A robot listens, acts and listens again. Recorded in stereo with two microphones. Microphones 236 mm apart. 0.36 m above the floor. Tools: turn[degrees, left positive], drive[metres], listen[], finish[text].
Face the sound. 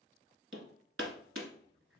Thought: The hammering: about 70° right or 110° right.
Action: turn[-70]
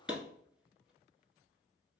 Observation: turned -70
Action: finish[Facing the hammering, 1 to 2 m away.]